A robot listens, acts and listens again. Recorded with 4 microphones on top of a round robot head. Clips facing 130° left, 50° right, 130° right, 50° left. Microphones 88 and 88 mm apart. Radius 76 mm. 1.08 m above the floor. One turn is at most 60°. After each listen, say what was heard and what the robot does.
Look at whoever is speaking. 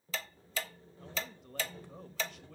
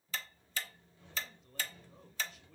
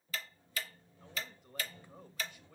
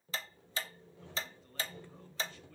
The man speaking: 155° left. Turn 60° left.
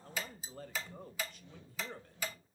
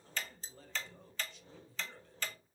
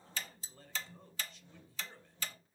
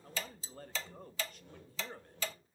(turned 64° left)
The man speaking is now 90° left. Turn 60° left.
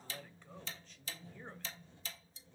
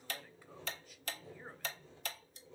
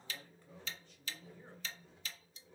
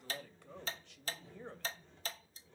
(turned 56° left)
The man speaking is now 35° left. Turn 35° left.
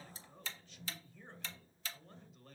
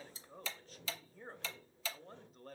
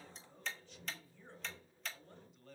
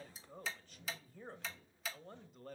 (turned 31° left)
Facing the man speaking.